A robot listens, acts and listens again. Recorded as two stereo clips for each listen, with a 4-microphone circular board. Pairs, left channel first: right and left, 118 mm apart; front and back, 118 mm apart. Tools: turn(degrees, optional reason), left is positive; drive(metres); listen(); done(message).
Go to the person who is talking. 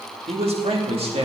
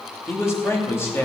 turn(degrees=65, reason="The man speaking: 65° left.")
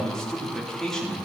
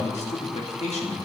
drive(metres=1.0)
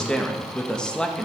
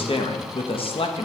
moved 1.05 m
turn(degrees=-10, reason="The man speaking is now 10° right.")
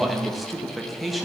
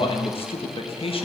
drive(metres=1.0)
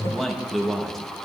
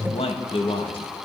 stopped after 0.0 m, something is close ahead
done("Arrived at the man speaking, straight ahead.")